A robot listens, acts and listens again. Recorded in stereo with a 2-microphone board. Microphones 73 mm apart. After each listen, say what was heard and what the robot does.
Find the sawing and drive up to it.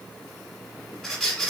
Keep listening.
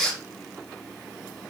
Keep listening.
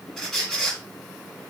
I can't make out sawing to turn to.